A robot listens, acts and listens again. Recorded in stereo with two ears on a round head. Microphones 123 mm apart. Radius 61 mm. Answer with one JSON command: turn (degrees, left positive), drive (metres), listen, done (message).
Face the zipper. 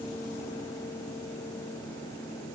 {"listen": true}
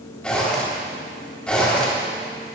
{"turn": 30}
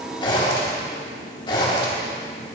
{"turn": 140}
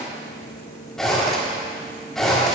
{"done": "Facing the zipper, 2 to 4 m away."}